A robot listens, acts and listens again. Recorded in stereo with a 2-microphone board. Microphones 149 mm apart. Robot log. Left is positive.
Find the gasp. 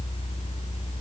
cmd idle
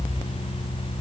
cmd idle
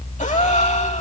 note: The gasp: about 50° left or 130° left.
cmd yaw +50
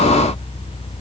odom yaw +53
cmd idle
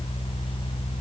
end: I heard a gasp, but can't make it out now. It was about straight ahead or 75° left.